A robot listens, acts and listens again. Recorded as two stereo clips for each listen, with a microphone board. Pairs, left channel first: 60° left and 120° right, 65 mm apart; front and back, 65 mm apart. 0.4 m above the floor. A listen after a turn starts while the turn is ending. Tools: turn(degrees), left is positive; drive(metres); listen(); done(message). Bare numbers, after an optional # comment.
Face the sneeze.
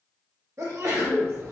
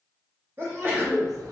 # The sneeze: 135° right.
turn(-135)
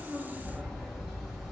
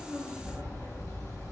done("I heard a sneeze from this way, but can't make it out now.")